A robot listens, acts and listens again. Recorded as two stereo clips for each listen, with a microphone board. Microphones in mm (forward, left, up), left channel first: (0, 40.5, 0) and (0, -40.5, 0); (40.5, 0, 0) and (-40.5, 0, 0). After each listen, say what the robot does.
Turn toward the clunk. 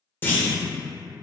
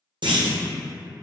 Turn 155° left.
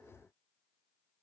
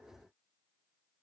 I heard a clunk from this way, but can't make it out now.